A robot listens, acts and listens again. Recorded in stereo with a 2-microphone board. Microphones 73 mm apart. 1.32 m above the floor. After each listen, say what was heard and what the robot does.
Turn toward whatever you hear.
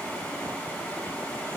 Keep listening.
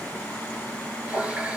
The running tap: about 15° right or 165° right. Turn 15° right.
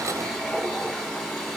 Facing the running tap, 2 to 4 m away.